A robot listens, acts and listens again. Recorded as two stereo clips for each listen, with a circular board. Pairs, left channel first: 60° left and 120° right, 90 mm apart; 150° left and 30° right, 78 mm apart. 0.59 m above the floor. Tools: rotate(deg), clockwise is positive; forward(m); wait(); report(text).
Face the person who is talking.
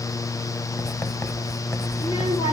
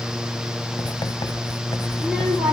wait()
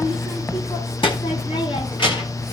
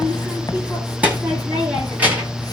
rotate(-40)
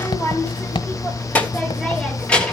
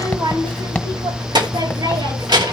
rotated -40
rotate(20)
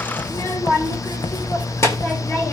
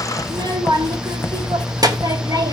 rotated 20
report("Facing the child speaking, 2 to 4 m away.")